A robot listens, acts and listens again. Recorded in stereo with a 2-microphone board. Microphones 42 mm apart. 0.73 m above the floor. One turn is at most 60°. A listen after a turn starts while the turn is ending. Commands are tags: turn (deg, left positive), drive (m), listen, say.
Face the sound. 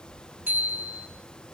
<turn deg="-45"/>
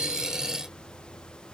<listen/>
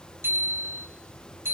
<turn deg="-60"/>
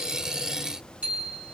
<turn deg="-30"/>
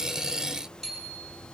<say>Facing the bicycle bell.</say>